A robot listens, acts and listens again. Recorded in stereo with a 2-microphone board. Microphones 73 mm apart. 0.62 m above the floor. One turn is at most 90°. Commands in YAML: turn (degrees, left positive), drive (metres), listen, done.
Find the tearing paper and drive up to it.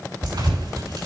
turn: -70
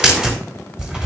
turn: -10
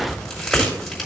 drive: 1.0
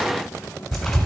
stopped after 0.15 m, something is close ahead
done: "Something is in my way. I am facing the tearing paper but have not reached it."